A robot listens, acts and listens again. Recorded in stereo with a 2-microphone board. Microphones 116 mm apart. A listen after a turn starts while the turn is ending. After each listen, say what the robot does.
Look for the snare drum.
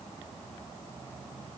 Keep listening.
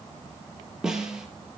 Turn 30° right.
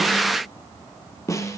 Turn 25° left.
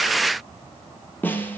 Turn 15° left.
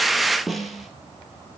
Facing the snare drum.